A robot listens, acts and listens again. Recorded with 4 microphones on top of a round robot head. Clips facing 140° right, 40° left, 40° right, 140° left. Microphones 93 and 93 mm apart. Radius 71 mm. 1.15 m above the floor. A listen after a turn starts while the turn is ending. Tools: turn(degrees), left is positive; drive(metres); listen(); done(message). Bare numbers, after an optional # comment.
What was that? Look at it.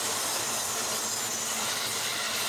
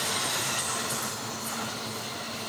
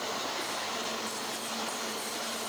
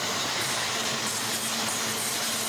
listen()
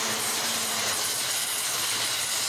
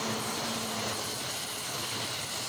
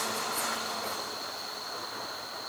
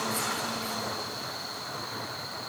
listen()
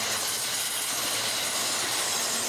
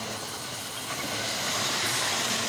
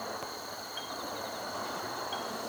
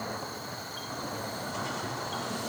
done("I can't make out anything to turn to.")